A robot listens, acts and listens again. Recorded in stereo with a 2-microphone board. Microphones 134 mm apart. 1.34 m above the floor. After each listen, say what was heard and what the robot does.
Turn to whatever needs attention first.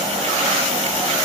Keep listening.
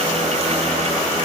Keep listening.
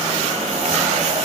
I can't make out anything urgent to turn to.